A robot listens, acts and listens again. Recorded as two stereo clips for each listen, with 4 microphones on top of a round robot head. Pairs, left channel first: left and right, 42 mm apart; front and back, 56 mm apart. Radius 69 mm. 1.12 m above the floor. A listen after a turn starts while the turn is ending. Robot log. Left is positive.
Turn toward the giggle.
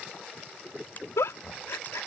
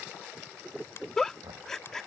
note: The giggle: 80° left.
cmd yaw +80
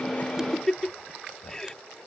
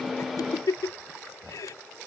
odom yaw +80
note: The giggle is now 15° left.
cmd yaw +15
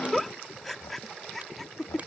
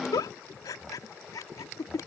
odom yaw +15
end: Facing the giggle.